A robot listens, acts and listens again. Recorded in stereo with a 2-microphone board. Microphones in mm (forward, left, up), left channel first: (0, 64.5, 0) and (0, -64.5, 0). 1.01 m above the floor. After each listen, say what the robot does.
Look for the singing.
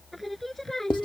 Turn 30° left.
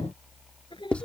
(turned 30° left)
Turn 140° left.
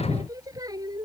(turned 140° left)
Turn 30° right.
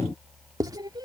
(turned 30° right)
Turn 30° right.
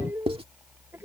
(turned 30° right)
Turn 15° right.
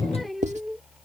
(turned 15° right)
Facing the singing.